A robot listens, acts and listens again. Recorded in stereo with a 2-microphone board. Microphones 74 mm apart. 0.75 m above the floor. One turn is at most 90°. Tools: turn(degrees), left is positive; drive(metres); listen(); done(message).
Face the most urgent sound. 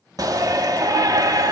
turn(degrees=-55)
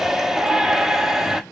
done("Facing the shout.")